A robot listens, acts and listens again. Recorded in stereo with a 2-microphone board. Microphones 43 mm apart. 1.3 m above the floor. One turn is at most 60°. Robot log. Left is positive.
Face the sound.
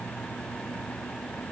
cmd idle
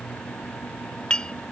note: The dishes clattering: about 20° left or 160° left.
cmd yaw +20
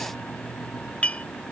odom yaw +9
note: The dishes clattering: about 30° left or 150° left.
cmd yaw +30
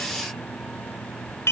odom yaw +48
note: So it is at 100° left.
cmd yaw +60
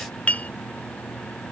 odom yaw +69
note: The dishes clattering is now 30° left.
cmd yaw +30
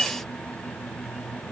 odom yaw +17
note: The dishes clattering is now 15° left.
cmd yaw +15
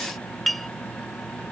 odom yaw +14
end: Found it: dishes clattering, straight ahead.